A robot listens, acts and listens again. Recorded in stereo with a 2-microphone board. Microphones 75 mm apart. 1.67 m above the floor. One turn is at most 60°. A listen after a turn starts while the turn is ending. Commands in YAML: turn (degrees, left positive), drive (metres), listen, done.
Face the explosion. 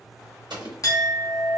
turn: -60
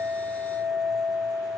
turn: -30
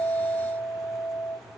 done: "Facing where the explosion came from. I can't hear it now."